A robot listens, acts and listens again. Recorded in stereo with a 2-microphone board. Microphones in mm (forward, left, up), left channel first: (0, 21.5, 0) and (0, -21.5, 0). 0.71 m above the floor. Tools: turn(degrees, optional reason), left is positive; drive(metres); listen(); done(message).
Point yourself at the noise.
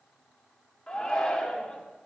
turn(degrees=20, reason="The shout: about 20° left or 160° left.")
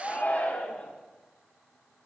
turn(degrees=135, reason="So it is at 135° left.")
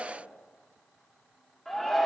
done("Found it: a shout, straight ahead, 1 to 2 m away.")